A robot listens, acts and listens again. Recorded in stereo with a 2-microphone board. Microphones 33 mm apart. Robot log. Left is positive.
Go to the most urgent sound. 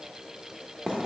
cmd idle
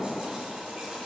cmd idle
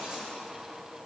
end: I can't make out anything urgent to turn to.